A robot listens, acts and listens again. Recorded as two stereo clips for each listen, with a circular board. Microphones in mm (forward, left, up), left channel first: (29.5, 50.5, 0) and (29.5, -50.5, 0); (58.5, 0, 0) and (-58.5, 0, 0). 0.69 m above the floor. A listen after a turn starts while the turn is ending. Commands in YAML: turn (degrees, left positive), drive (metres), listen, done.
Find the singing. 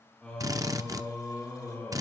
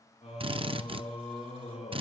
turn: 20
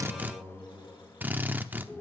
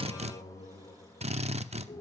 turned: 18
turn: 10
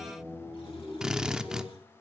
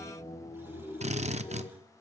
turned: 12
done: "Facing the singing."